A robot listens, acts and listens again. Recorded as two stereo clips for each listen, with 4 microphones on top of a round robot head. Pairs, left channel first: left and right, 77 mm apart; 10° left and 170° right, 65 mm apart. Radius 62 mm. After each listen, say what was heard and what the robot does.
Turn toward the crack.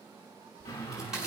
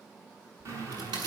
The crack: 175° right. Turn 175° right.
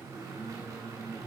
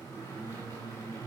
I heard a crack from this way, but can't make it out now.